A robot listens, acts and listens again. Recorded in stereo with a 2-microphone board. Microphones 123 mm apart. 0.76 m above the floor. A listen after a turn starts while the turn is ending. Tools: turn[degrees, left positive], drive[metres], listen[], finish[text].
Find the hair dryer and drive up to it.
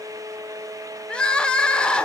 Action: listen[]
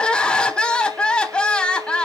Action: listen[]
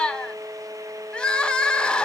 Action: finish[I can't make out a hair dryer to turn to.]